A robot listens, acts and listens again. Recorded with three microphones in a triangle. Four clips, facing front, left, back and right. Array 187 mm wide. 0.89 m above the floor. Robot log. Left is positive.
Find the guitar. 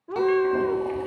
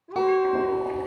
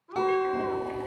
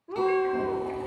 note: The guitar: 85° left.
cmd yaw +85
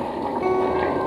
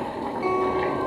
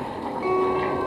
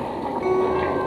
note: The guitar is now 10° left.
cmd yaw +10
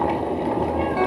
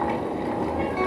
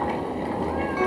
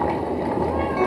cmd idle
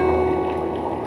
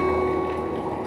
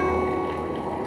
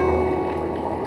cmd idle
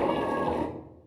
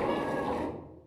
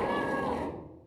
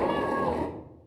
end: Found it: a guitar, straight ahead.